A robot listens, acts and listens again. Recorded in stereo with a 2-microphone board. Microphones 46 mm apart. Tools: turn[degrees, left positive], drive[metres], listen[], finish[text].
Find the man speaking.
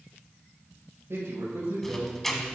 Thought: The man speaking: about 65° right or 115° right.
Action: turn[-65]
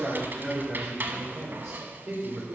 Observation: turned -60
Thought: So it is at 50° right.
Action: turn[-50]
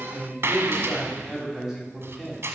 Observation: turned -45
Thought: The man speaking is now 10° right.
Action: turn[-10]
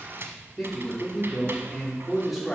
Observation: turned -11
Action: finish[Found it: a man speaking, straight ahead, 2 to 4 m away.]